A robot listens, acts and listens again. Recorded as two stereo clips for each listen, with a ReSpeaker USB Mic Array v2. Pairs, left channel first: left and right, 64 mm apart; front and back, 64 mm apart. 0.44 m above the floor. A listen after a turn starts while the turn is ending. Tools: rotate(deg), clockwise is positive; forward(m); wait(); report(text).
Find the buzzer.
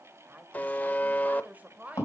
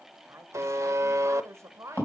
rotate(-150)
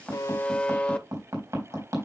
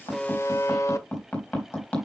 rotate(-20)
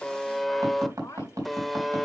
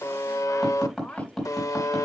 report("Found it: a buzzer, straight ahead.")